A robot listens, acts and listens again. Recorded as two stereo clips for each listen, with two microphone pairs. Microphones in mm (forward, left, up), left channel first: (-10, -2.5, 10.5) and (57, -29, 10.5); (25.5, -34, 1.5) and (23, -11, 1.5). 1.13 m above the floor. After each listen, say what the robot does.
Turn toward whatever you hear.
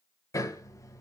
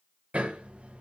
Turn 115° left.
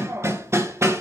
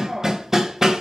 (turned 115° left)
Turn 25° left.
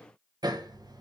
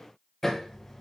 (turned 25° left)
Turn 10° right.
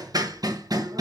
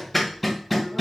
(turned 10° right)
Facing the hammering, 1 to 2 m away.